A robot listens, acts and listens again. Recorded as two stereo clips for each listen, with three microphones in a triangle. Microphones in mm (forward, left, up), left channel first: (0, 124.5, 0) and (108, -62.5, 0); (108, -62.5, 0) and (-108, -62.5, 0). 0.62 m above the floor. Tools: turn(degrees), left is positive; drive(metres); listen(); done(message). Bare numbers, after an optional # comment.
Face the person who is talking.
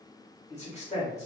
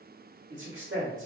# The man speaking: 175° left.
turn(175)
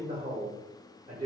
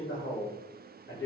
done("Facing the man speaking.")